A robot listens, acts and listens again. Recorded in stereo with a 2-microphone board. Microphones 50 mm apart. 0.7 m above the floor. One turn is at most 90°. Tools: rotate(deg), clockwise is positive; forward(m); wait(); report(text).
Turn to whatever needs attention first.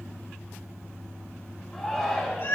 rotate(-30)
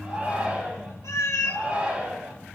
rotate(25)
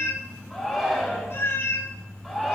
report("Facing the shout.")